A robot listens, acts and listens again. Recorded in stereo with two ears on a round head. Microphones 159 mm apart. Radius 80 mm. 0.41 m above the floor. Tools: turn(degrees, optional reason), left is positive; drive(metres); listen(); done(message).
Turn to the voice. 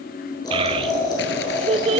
turn(degrees=-30, reason="The child speaking: about 30° right or 150° right.")
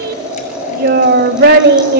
turn(degrees=-120, reason="So it is at 120° right.")
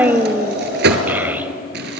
turn(degrees=-10, reason="The child speaking is now 10° right.")
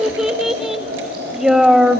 done("Found it: a child speaking, straight ahead.")